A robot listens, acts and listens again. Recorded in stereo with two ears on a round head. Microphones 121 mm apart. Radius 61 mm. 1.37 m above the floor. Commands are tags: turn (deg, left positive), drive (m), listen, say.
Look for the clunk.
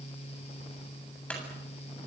<turn deg="30"/>
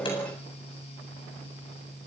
<listen/>
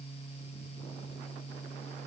<say>I heard a clunk, but can't make it out now. It was about 20° right or 140° left.</say>